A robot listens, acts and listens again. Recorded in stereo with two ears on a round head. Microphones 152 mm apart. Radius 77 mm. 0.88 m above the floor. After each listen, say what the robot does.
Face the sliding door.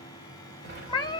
Turn 60° right.
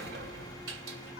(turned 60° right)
Turn 60° right.
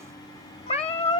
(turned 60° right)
Keep listening.
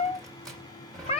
Found it: a sliding door, straight ahead.